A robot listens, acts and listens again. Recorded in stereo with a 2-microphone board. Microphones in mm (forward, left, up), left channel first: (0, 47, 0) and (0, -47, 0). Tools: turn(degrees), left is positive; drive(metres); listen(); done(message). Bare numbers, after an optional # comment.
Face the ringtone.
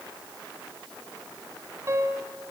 listen()
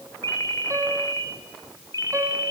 # The ringtone: about 35° left or 145° left.
turn(35)
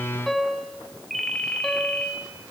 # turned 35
done("Facing the ringtone.")